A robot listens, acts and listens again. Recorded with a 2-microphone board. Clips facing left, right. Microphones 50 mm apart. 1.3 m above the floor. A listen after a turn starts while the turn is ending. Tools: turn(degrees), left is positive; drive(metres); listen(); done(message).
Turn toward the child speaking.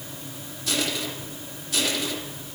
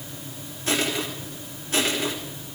listen()
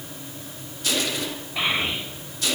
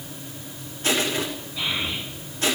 turn(degrees=90)
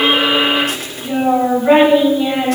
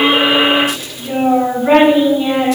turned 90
done("Found it: a child speaking, straight ahead.")